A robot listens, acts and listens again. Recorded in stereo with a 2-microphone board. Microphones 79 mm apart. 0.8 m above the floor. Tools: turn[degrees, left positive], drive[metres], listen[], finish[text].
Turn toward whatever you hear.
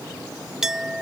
Action: turn[-30]
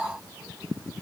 Action: listen[]
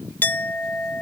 Thought: So it is at 25° left.
Action: turn[25]
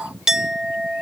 Action: finish[Facing the clink.]